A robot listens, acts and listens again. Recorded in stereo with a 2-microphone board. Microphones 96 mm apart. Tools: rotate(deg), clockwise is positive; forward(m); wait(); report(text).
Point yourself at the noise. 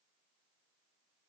wait()
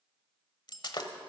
rotate(-50)
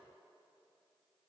wait()
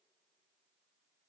report("I heard breaking glass, but can't make it out now. It was about straight ahead or 80° left.")